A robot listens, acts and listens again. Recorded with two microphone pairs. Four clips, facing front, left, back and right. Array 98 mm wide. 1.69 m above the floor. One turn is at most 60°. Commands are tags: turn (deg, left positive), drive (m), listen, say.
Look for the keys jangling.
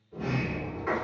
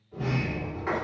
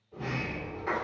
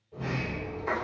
<listen/>
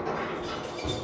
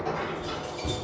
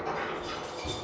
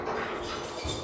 <turn deg="55"/>
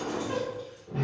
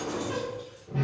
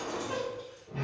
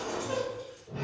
<listen/>
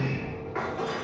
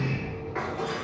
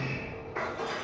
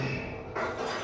<listen/>
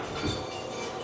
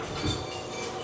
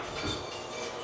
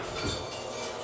<turn deg="40"/>
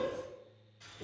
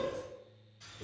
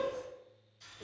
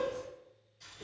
<say>Found it: keys jangling, straight ahead, 1 to 2 m away.</say>